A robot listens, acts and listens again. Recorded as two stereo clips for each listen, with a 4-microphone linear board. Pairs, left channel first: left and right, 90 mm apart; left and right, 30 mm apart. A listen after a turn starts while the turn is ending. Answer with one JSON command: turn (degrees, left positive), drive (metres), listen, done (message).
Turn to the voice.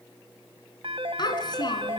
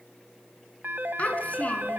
{"turn": 50}
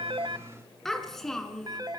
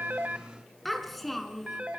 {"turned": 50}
{"done": "Facing the child speaking."}